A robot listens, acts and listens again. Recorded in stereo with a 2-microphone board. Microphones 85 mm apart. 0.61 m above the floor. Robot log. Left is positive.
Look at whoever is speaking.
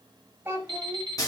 note: The child speaking: about 30° right or 150° right.
cmd yaw -30
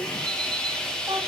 cmd idle
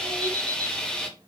cmd idle
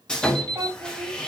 note: So it is at 115° right.
cmd yaw -115
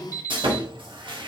cmd idle
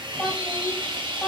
end: Found it: a child speaking, straight ahead, 2 to 4 m away.